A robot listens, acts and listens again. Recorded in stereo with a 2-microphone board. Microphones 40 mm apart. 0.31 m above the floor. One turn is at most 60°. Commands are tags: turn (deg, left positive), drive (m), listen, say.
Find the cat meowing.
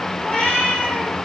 <turn deg="20"/>
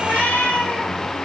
<turn deg="35"/>
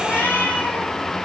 <turn deg="60"/>
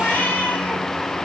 <turn deg="60"/>
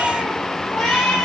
<say>Facing the cat meowing, over 4 m away.</say>